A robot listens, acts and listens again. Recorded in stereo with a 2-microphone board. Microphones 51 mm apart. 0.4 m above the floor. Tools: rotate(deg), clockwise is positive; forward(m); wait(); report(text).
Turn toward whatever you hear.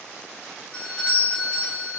rotate(-20)
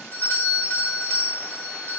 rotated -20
rotate(-140)
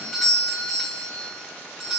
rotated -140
report("Facing the doorbell.")